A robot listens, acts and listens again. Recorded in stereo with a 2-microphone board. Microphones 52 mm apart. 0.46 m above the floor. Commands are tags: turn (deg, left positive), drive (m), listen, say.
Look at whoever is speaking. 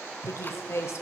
<turn deg="60"/>
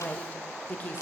<turn deg="35"/>
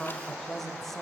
<say>Found it: a woman speaking, straight ahead, 1 to 2 m away.</say>